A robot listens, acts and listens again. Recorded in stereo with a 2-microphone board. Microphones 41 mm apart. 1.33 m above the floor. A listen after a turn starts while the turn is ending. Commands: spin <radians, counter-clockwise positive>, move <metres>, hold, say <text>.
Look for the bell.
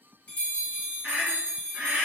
spin 0.96
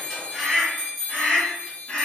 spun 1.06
say Found it: a bell, straight ahead, 1 to 2 m away.